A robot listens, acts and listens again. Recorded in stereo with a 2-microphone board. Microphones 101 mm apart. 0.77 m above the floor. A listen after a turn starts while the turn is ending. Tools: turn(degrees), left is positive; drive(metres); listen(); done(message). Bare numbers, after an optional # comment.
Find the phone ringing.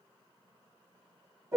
listen()
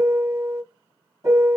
listen()
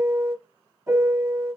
done("I can't make out a phone ringing to turn to.")